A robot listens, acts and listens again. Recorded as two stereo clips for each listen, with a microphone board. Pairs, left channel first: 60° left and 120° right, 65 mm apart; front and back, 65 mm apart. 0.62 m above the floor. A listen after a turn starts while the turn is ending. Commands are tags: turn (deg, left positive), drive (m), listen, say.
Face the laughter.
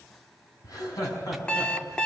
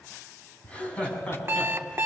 <turn deg="70"/>
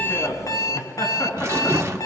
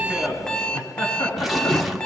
<turn deg="15"/>
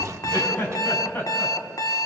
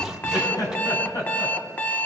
<say>Facing the laughter, over 4 m away.</say>